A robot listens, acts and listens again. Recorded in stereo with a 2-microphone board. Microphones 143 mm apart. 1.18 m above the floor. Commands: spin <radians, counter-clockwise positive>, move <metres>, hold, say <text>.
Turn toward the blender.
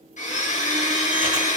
spin 1.05
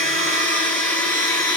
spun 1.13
spin 0.17
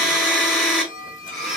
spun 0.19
say Found it: a blender, straight ahead, 2 to 4 m away.